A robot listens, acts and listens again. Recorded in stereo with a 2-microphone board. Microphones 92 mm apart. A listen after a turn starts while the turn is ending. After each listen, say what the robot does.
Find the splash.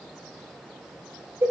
Keep listening.
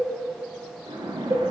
Turn 70° right.
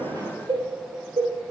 Keep listening.
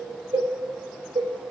I heard a splash, but can't make it out now. It was about straight ahead or 40° right.